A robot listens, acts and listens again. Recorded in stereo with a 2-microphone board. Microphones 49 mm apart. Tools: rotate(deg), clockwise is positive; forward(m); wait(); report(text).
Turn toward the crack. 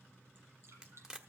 rotate(30)
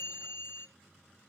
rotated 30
wait()
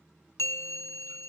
report("I heard a crack, but can't make it out now. It was about 15° left or 135° right.")